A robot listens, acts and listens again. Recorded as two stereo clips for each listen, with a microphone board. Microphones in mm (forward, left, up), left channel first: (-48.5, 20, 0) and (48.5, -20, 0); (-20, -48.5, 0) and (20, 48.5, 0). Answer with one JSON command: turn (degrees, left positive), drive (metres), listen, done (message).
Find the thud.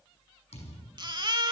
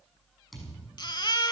{"turn": 160}
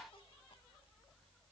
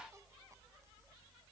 {"done": "Facing where the thud came from. I can't hear it now."}